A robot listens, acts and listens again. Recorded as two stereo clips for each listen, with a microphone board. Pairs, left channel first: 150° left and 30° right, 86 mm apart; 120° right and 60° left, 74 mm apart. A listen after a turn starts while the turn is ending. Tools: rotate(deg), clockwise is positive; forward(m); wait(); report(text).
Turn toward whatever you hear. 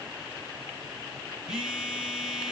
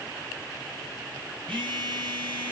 rotate(-55)
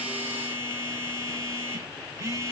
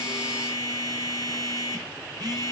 rotate(-30)
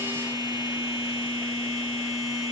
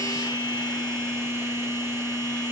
report("Facing the phone buzzing, over 4 m away.")